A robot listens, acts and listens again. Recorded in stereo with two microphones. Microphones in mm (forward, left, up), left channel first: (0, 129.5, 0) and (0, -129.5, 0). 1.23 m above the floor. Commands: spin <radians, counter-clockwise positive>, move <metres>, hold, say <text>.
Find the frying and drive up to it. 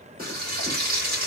spin -0.61
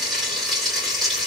move 1.0
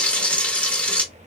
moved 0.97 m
move 1.0
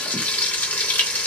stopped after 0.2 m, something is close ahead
say I am next to the frying.